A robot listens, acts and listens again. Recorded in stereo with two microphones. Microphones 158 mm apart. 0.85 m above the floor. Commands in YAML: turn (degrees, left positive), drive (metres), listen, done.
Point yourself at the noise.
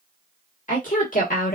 turn: 65
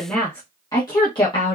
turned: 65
turn: 35
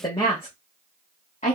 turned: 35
turn: 45
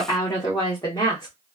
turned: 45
turn: 25
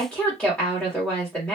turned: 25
done: "Found it: a woman speaking, straight ahead."